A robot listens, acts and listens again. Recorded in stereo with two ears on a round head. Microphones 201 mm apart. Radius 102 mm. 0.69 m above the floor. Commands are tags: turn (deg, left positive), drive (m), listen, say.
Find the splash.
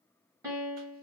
<listen/>
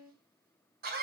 <listen/>
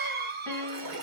<turn deg="-65"/>
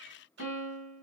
<listen/>
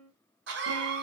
<say>I heard a splash, but can't make it out now. It was about straight ahead or 50° right.</say>